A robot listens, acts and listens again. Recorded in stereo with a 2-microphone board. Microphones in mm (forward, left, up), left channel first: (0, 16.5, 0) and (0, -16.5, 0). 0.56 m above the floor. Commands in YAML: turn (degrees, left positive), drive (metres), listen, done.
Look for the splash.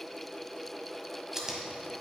listen: true
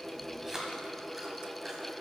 listen: true
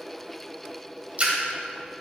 turn: -45
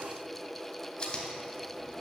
listen: true
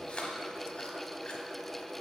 done: "I heard a splash, but can't make it out now. It was about straight ahead or 90° right."